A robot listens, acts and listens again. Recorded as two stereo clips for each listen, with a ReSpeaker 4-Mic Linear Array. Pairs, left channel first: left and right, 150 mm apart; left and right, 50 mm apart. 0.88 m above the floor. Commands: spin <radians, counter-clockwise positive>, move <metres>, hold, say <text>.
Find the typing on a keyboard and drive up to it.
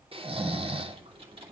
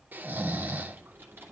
spin -0.70
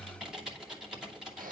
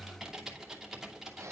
move 1.0
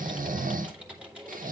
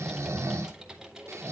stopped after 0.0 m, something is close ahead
spin -0.17
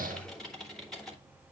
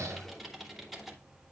say Blocked. The typing on a keyboard is further on, straight ahead.